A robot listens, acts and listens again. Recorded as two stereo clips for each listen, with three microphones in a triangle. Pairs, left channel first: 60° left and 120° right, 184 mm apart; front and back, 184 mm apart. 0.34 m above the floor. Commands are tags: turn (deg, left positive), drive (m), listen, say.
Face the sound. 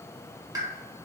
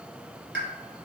<turn deg="170"/>
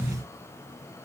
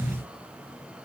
<say>Facing where the pop came from. I can't hear it now.</say>